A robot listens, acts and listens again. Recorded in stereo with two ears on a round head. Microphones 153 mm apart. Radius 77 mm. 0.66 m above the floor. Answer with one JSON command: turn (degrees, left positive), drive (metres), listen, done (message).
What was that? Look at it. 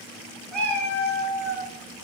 {"turn": 30}
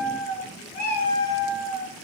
{"turn": 120}
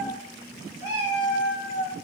{"turn": -45}
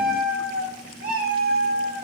{"turn": -10}
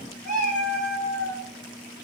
{"done": "Found it: a cat meowing, straight ahead, 2 to 4 m away."}